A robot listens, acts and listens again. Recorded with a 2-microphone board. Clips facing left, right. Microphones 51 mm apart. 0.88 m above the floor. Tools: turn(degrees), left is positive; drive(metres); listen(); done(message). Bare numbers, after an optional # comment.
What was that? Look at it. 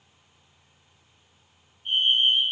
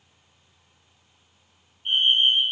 # The fire alarm: about 45° right or 135° right.
turn(-45)
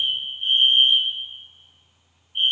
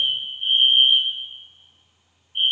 done("Facing the fire alarm, over 4 m away.")